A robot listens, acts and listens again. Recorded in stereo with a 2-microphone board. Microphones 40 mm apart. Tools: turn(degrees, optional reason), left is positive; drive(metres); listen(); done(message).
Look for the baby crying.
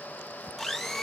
listen()
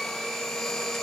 listen()
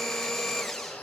done("I can't make out a baby crying to turn to.")